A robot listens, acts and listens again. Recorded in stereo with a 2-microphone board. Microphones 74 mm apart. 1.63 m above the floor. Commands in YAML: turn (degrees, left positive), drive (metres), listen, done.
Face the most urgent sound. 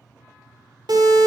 turn: -90
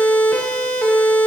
turn: 15
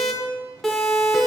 done: "Facing the siren."